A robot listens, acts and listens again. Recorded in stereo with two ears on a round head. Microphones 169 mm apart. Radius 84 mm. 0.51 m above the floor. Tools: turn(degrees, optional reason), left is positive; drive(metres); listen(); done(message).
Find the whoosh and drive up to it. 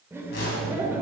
turn(degrees=65, reason="The whoosh: about 65° left or 115° left.")
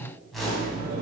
drive(metres=1.0)
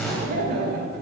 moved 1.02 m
drive(metres=1.0)
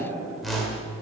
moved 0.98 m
drive(metres=1.0)
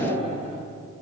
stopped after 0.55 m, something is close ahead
listen()
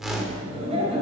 done("Arrived at the whoosh, straight ahead.")